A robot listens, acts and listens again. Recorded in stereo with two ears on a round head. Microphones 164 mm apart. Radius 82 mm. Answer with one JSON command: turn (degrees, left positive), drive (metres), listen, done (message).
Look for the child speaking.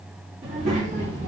{"turn": -45}
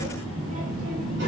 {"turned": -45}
{"turn": -65}
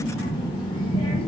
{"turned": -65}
{"turn": 35}
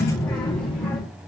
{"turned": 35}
{"turn": 15}
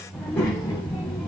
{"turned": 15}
{"turn": 15}
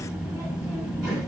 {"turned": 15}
{"done": "Found it: a child speaking, straight ahead."}